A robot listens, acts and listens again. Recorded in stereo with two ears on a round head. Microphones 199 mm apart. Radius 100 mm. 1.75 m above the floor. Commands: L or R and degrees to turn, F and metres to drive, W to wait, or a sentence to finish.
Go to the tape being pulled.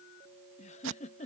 R60
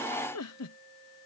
W
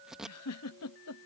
F1.0
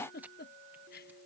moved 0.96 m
W
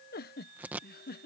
R10
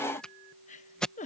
F1.0
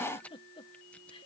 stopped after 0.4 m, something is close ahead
W
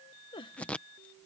Arrived at the tape being pulled, straight ahead.